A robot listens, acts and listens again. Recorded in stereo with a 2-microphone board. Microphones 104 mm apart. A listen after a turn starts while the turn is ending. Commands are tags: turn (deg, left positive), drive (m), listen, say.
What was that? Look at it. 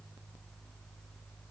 <listen/>
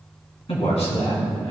<turn deg="90"/>
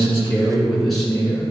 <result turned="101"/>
<say>Facing the man speaking, 2 to 4 m away.</say>